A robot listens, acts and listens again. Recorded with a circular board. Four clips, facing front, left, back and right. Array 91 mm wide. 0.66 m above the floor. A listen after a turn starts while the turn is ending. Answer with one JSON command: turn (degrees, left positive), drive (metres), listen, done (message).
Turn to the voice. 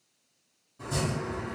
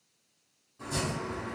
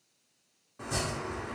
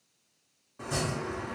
{"listen": true}
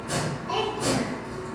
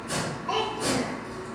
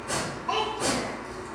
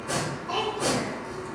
{"turn": 145}
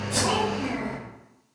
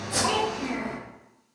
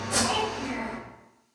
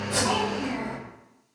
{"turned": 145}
{"listen": true}
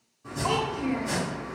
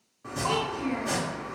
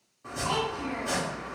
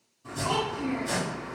{"turn": 35}
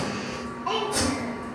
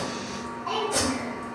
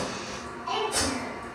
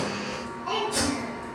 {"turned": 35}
{"done": "Found it: a child speaking, straight ahead."}